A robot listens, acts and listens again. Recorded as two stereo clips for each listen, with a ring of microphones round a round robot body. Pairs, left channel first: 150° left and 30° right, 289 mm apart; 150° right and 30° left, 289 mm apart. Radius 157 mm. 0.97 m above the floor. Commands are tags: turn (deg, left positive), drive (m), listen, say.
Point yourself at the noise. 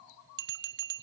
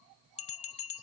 <turn deg="-85"/>
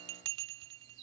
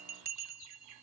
<turn deg="-30"/>
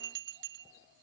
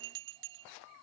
<turn deg="25"/>
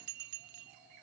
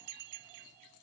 <say>Facing the bell.</say>